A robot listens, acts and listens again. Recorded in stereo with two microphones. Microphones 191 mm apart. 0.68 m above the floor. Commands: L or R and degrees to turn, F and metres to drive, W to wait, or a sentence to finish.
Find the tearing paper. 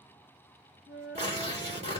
R35
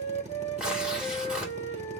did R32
Facing the tearing paper, 2 to 4 m away.